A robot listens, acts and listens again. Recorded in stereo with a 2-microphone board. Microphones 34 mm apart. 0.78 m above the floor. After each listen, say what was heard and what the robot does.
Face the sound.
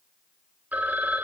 The phone ringing: about 60° right or 120° right. Turn 60° right.
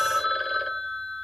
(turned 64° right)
Facing the phone ringing.